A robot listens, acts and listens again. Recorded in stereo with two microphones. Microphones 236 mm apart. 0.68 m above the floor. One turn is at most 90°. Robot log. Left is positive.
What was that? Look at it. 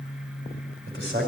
note: The man speaking: about 50° right or 130° right.
cmd yaw -50
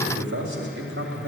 note: So it is at 80° right.
cmd yaw -80
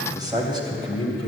note: The man speaking is now 25° right.
cmd yaw -25
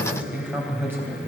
note: The man speaking is now 10° right.
cmd yaw -10
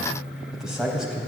end: Found it: a man speaking, straight ahead.